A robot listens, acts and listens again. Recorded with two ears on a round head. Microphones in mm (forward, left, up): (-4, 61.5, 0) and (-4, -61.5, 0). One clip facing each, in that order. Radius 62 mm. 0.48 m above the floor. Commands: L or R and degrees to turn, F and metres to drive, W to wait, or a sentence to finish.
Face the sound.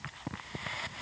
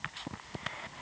W
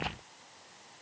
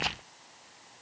W
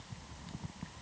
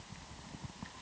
I can't make out anything.